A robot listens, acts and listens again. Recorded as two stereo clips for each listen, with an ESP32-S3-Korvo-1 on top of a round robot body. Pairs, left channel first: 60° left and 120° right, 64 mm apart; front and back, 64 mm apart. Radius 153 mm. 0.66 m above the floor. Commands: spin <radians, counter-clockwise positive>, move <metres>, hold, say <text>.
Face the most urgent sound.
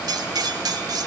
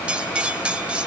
hold
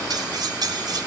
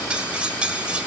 hold
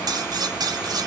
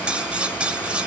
say I can't make out anything urgent to turn to.